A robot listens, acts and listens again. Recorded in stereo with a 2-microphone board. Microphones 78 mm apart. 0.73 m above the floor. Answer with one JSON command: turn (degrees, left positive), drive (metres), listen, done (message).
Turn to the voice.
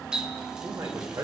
{"turn": -50}
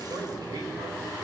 {"turn": -80}
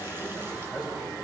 {"turn": -15}
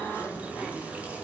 {"listen": true}
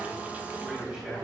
{"turn": -10}
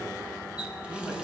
{"done": "Found it: a man speaking, straight ahead."}